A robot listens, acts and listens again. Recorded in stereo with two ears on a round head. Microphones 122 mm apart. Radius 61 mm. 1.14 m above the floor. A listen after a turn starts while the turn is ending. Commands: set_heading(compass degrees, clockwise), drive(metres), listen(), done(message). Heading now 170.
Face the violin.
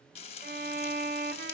set_heading(245)
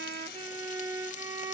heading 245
set_heading(270)
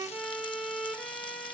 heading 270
done("Facing the violin.")